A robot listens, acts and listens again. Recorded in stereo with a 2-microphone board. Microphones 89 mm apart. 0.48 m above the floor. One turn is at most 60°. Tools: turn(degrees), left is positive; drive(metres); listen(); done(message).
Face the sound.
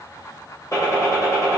turn(degrees=35)
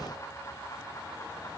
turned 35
listen()
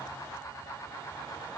done("I heard a gunshot, but can't make it out now. It was about straight ahead or 110° left.")